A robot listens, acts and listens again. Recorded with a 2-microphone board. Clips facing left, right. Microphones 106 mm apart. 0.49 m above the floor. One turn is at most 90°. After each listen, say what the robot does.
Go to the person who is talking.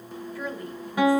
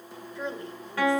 Turn 25° right.
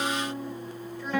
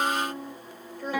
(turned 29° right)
Turn 90° right.
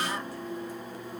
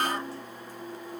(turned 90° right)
Turn 35° right.
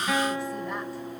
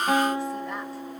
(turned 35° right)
Keep listening.
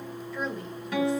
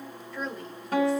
Drive 1.0 m forward.
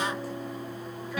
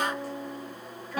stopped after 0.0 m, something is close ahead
Keep listening.
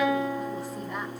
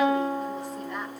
Keep listening.
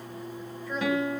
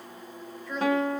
Something is in my way. I am facing the woman speaking but have not reached it.